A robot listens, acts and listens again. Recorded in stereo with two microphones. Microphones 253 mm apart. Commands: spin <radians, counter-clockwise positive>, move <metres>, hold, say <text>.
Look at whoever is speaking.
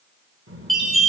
spin -0.96
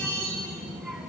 say Facing the child speaking.